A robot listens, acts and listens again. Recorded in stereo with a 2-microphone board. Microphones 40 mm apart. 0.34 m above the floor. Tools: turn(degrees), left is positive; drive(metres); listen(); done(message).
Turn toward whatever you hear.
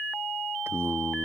turn(degrees=-75)
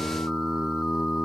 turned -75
turn(degrees=-10)
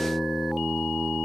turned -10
turn(degrees=-10)
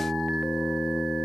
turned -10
done("Found it: singing, straight ahead.")